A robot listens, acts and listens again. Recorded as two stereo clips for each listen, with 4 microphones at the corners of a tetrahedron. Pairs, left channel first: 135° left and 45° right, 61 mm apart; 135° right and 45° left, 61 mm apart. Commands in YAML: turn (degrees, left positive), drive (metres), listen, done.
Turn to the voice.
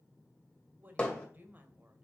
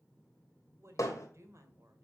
turn: 15
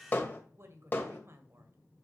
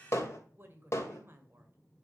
done: "Found it: a woman speaking, straight ahead."